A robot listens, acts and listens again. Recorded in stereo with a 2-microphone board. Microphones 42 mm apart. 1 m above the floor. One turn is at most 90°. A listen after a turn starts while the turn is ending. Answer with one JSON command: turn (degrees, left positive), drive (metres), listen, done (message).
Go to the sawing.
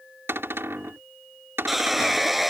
{"turn": -30}
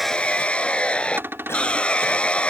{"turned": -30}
{"turn": 30}
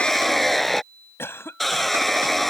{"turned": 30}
{"drive": 1.0}
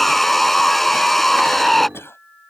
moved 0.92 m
{"drive": 1.0}
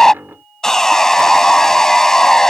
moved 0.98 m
{"turn": 15}
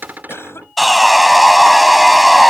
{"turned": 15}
{"drive": 1.0}
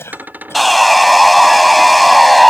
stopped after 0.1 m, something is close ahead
{"done": "Arrived at the sawing, straight ahead."}